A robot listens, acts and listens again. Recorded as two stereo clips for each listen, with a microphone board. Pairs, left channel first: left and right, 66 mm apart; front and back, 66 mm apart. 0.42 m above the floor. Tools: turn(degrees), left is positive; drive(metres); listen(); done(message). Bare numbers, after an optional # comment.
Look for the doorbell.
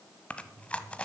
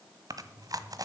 listen()
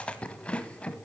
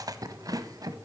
listen()
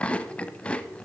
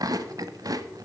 done("I can't make out a doorbell to turn to.")